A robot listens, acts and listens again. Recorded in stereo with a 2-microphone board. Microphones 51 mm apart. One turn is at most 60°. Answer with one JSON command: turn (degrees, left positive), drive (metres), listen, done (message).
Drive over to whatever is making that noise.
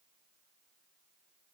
{"listen": true}
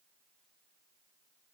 {"listen": true}
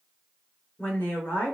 {"turn": 35}
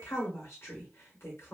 {"turn": 60}
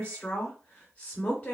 {"turn": 35}
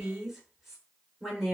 {"drive": 1.0}
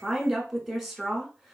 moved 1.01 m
{"drive": 1.0}
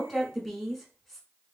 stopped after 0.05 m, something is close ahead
{"done": "I am next to the woman speaking."}